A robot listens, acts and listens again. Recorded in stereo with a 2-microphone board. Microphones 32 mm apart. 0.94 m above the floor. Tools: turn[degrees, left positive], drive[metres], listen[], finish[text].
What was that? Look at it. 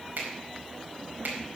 Action: turn[-90]
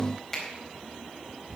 Thought: So it is at 15° left.
Action: turn[15]
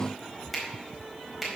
Action: finish[Facing the finger snap.]